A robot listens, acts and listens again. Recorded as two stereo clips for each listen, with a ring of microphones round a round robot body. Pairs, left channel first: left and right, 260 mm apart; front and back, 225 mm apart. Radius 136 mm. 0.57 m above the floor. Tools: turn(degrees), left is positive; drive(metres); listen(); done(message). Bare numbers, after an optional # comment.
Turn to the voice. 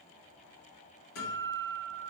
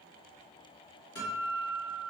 listen()
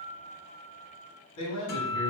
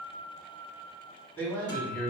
# The man speaking: 80° left.
turn(80)
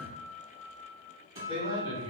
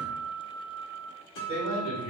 # The man speaking is now 20° left.
turn(20)
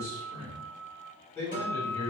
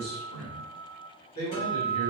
# The man speaking is now 10° left.
turn(10)
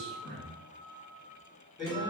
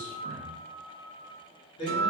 done("Found it: a man speaking, straight ahead.")